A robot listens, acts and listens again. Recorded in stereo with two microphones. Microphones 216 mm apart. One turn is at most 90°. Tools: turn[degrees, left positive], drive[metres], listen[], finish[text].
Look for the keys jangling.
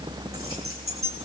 Action: turn[-90]
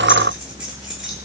Action: listen[]
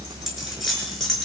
Action: finish[Facing the keys jangling.]